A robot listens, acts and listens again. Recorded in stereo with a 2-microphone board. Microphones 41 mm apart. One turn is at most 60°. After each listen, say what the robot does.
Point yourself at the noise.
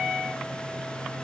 Keep listening.
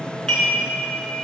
Turn 30° left.
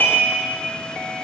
Turn 60° left.
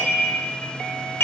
Turn 60° left.
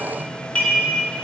Turn 30° left.
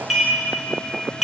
Facing the dishes clattering, 2 to 4 m away.